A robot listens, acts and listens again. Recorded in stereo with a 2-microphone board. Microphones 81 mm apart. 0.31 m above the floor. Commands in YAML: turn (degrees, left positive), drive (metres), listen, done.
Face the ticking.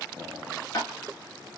turn: 45
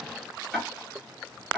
done: "Facing the ticking, 1 to 2 m away."